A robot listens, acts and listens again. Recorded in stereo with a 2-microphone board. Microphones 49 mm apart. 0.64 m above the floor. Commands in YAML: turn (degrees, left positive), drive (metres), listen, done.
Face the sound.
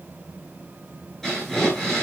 turn: 30
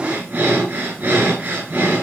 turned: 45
turn: -35
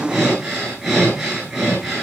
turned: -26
turn: -10
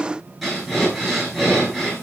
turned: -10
done: "Found it: breathing, straight ahead, over 4 m away."